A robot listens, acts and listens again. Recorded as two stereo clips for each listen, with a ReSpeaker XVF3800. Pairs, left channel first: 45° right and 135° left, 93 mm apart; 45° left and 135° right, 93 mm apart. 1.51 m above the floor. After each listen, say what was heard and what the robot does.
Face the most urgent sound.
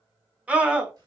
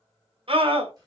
The scream: 150° right. Turn 150° right.
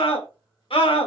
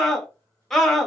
The scream is now 40° right. Turn 40° right.
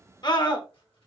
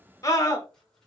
Facing the scream, 1 to 2 m away.